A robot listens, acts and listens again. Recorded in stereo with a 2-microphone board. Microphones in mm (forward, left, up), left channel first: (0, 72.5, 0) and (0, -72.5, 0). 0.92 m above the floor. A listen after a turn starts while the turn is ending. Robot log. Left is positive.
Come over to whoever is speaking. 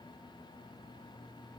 cmd idle
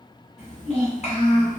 note: The child speaking: about 50° left or 130° left.
cmd yaw +50
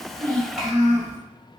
cmd fwd 1.0
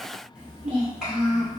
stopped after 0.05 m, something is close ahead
end: Blocked. The child speaking is further on, straight ahead.